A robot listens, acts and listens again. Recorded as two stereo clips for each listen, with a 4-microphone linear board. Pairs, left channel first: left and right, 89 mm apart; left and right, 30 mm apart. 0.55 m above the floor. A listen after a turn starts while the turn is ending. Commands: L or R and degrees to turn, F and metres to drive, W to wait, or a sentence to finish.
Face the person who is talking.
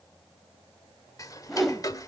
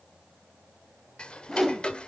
W
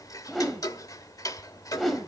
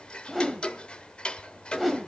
W
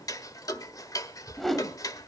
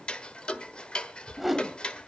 I can't make out anyone speaking, only ticking and a whoosh.